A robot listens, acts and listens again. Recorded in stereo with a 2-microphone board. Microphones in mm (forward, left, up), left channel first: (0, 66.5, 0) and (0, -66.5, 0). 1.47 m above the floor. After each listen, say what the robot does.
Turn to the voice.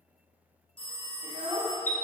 Turn 40° right.
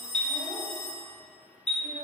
Keep listening.
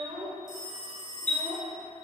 Turn 95° right.
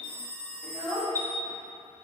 Turn 15° right.
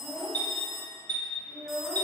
Facing the child speaking.